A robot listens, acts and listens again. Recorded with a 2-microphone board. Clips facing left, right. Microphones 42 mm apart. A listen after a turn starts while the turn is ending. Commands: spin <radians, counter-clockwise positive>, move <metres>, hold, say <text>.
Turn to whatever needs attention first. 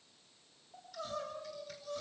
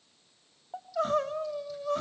spin -0.96
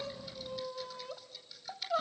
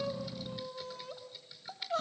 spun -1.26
spin 0.17
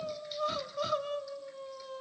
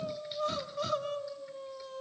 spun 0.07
say Facing the crying, 1 to 2 m away.